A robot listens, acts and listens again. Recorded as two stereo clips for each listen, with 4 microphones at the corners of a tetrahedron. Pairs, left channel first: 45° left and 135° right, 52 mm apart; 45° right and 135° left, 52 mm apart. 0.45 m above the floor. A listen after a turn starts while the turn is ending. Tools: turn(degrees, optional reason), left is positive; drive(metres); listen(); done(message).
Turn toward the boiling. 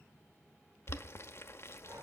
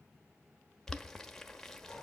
turn(degrees=35, reason="The boiling: 35° left.")
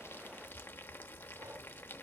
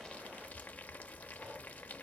turn(degrees=10, reason="The boiling is now 10° left.")
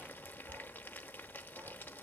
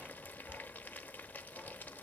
done("Facing the boiling, under 1 m away.")